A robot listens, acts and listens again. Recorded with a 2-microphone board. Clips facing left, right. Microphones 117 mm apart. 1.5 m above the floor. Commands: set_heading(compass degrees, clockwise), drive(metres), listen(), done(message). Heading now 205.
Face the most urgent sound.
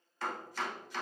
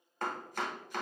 listen()
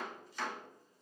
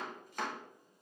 listen()
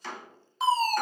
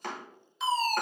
set_heading(150)
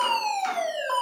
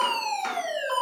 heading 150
set_heading(100)
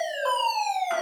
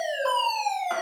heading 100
set_heading(85)
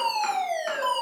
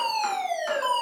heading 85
done("Facing the fire alarm, 1 to 2 m away.")